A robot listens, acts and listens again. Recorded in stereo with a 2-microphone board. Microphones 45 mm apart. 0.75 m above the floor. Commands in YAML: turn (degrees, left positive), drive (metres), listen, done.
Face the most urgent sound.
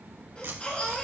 turn: 30
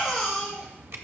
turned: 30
done: "Facing the baby crying."